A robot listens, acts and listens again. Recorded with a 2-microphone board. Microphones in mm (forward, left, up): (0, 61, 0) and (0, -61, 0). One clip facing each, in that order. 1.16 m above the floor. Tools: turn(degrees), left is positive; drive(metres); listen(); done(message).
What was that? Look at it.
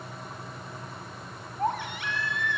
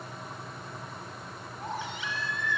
turn(degrees=60)
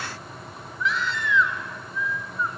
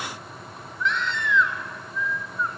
done("Facing the baby crying, 2 to 4 m away.")